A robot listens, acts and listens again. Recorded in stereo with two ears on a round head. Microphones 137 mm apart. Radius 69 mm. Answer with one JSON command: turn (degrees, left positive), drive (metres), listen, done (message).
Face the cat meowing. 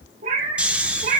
{"turn": -50}
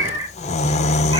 {"turn": -25}
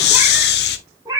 {"turn": -25}
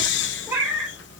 {"turn": -10}
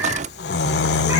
{"listen": true}
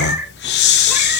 {"turn": -10}
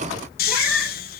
{"done": "Found it: a cat meowing, straight ahead, 2 to 4 m away."}